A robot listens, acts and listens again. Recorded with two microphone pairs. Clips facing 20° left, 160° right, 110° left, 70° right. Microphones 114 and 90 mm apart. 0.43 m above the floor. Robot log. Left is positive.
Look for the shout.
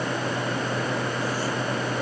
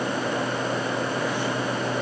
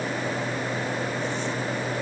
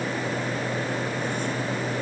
cmd idle
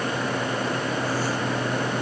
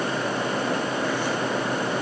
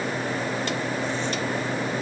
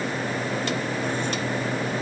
cmd idle
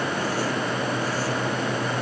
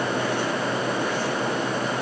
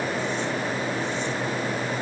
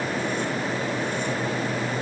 end: I can't make out a shout to turn to.